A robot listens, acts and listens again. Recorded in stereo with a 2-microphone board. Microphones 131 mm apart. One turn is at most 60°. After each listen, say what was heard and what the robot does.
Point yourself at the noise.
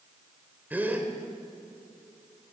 Turn 30° right.
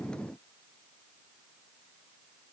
Keep listening.
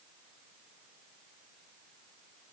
I heard a gasp, but can't make it out now. It was about 20° left or 140° right.